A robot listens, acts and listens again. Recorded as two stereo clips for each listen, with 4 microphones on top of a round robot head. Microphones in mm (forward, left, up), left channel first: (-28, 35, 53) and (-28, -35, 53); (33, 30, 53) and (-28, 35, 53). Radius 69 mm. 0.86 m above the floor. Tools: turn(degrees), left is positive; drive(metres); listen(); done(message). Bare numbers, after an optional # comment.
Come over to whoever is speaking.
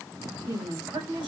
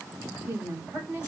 # The woman speaking: 115° right.
turn(-115)
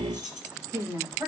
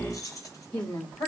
# The woman speaking is now 20° right.
turn(-20)
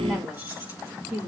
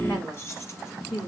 drive(1.0)
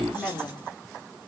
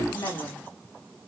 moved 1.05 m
drive(1.0)
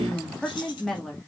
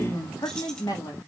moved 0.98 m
# The woman speaking is now 10° left.
turn(10)
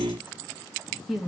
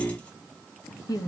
drive(1.0)
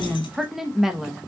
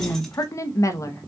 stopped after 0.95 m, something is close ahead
done("I am next to the woman speaking.")